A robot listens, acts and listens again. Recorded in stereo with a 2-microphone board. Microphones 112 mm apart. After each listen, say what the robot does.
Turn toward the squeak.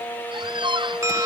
Turn 45° right.
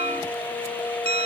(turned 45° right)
Keep listening.
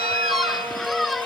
Found it: a squeak, straight ahead.